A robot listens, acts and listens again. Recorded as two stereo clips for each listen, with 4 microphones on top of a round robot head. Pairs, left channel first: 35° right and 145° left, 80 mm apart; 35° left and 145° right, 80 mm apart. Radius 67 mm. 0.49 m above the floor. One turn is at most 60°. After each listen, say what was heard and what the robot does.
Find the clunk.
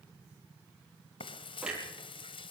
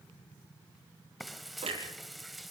The clunk: 135° right. Turn 60° right.
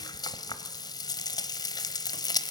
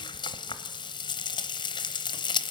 Nothing new. It was at 75° right. Turn 60° right.
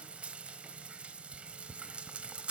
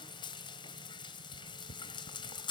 Nothing new. It was at 15° right. Turn 15° right.
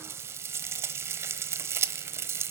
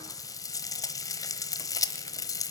I heard a clunk from this way, but can't make it out now.